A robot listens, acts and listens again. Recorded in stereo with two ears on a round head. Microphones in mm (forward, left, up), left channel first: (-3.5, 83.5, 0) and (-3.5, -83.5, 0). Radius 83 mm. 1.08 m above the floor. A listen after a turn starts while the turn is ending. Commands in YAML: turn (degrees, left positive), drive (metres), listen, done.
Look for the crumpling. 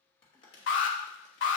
turn: 30
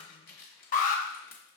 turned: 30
turn: 115
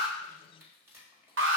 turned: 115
turn: -15
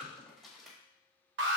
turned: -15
done: "Found it: crumpling, straight ahead."